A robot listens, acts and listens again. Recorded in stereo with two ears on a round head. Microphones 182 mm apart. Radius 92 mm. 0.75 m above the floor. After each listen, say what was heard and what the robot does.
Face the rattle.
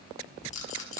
The rattle: about 35° left or 145° left. Turn 35° left.
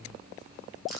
Keep listening.
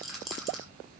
Facing the rattle, over 4 m away.